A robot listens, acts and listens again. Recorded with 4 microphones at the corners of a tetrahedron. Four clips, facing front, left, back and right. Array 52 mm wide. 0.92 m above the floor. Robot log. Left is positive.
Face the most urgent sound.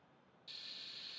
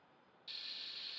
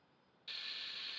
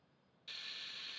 cmd idle
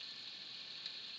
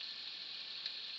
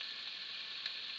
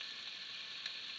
cmd idle
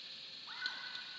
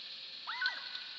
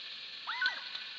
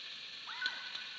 note: The scream: 160° left.
cmd yaw +160
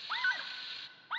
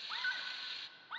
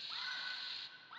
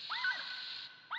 note: The scream is now 10° right.
cmd yaw -10
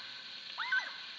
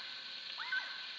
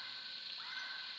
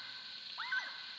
end: Found it: a scream, straight ahead, 1 to 2 m away.